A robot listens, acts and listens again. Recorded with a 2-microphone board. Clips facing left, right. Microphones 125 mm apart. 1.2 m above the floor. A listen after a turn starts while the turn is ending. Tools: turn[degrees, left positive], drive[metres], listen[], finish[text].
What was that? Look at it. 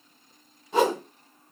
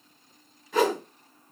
Thought: The whoosh: about 25° left or 155° left.
Action: turn[25]
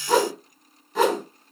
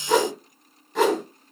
Action: finish[Found it: a whoosh, straight ahead.]